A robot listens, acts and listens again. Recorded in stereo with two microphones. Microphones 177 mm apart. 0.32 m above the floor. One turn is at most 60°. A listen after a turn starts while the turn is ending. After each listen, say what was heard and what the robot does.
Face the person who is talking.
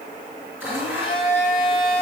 Keep listening.
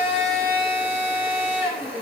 Keep listening.
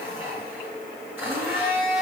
I can't make out anyone speaking to turn to.